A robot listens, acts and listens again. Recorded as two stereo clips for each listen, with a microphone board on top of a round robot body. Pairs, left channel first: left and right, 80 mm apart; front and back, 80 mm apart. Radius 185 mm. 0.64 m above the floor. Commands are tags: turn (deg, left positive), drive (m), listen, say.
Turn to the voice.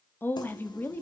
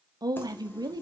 <turn deg="155"/>
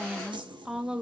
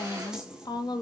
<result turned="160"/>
<turn deg="-10"/>
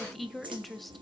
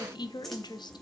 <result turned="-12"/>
<say>Found it: a woman speaking, straight ahead.</say>